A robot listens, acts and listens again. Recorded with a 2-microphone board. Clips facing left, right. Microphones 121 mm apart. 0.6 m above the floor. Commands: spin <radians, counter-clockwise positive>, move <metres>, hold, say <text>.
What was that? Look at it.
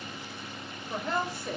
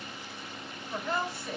spin 0.70
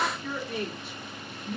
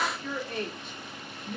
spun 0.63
say Facing the woman speaking, 1 to 2 m away.